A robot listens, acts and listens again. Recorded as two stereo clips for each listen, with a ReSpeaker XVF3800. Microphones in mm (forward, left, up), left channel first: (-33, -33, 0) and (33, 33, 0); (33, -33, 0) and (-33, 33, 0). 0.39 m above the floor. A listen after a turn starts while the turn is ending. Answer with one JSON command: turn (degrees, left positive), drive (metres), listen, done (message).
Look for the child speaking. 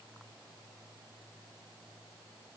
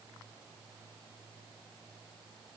{"listen": true}
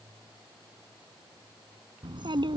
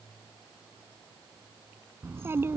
{"turn": 70}
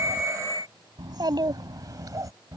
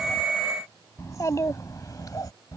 {"done": "Found it: a child speaking, straight ahead."}